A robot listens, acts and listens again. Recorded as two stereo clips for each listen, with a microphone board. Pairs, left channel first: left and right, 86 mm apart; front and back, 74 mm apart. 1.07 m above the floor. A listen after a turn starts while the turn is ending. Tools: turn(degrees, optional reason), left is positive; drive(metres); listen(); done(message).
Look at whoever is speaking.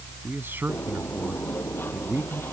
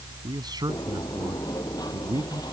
turn(degrees=-155, reason="The man speaking: 155° right.")
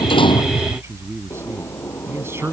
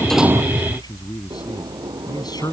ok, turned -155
turn(degrees=-30, reason="The man speaking is now 30° right.")
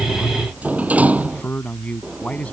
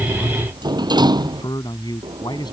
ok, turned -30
turn(degrees=15, reason="The man speaking is now 15° left.")
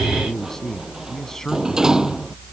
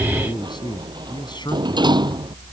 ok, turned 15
done("Facing the man speaking.")